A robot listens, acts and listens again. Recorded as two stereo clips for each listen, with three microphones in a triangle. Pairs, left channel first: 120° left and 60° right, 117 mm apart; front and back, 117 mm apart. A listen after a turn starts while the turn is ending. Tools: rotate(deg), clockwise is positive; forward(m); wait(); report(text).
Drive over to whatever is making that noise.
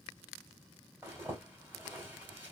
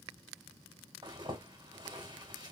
rotate(135)
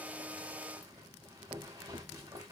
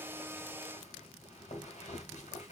forward(1.0)
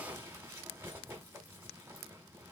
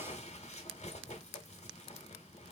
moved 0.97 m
rotate(-10)
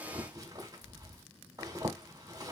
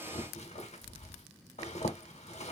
forward(1.0)
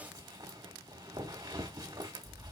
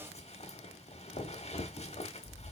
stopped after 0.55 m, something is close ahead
report("I am next to the zipper.")